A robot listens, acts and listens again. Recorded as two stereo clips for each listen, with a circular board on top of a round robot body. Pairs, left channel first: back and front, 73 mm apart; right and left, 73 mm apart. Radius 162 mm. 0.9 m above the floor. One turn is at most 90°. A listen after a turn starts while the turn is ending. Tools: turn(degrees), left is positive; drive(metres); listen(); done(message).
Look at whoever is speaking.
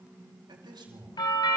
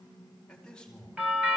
turn(degrees=-10)
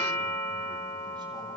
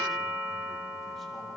listen()
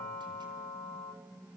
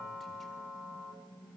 listen()
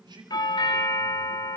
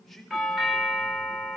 done("Facing the man speaking, over 4 m away.")